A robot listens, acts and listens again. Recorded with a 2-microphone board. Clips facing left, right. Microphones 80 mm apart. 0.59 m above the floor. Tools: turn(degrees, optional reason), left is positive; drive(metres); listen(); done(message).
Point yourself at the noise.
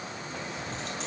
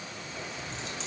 turn(degrees=50, reason="The keys jangling: about 50° left or 130° left.")
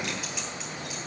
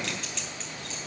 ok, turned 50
listen()
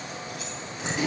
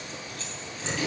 turn(degrees=20, reason="So it is at 20° left.")
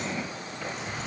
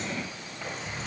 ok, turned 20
done("Found it: keys jangling, straight ahead, 2 to 4 m away.")